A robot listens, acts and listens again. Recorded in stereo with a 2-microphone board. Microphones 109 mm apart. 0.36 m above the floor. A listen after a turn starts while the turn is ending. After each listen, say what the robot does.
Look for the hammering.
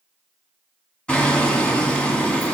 Turn 30° left.
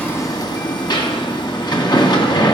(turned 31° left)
Turn 140° left.
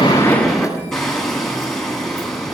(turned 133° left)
Found it: hammering, straight ahead, 1 to 2 m away.